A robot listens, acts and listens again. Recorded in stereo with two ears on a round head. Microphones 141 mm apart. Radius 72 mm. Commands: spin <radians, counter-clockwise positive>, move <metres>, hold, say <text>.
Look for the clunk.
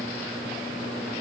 hold
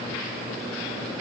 hold
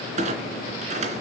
spin -0.87
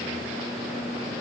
hold
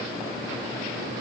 say I heard a clunk, but can't make it out now. It was about straight ahead or 80° right.